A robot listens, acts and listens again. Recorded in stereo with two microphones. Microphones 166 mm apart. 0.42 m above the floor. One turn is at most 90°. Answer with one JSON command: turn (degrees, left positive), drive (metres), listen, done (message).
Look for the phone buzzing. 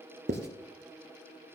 {"listen": true}
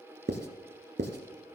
{"listen": true}
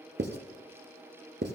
{"done": "I can't make out a phone buzzing to turn to."}